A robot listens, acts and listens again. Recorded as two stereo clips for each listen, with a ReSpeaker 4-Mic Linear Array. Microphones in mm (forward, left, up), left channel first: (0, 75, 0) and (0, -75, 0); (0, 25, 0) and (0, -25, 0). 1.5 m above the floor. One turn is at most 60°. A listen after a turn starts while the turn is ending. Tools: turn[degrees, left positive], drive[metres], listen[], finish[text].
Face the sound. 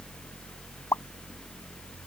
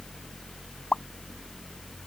Thought: The pop: about 20° left or 160° left.
Action: turn[20]
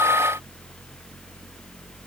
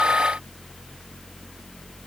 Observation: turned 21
Action: listen[]
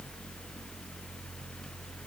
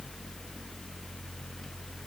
Action: finish[I heard a pop, but can't make it out now. It was about straight ahead or 140° left.]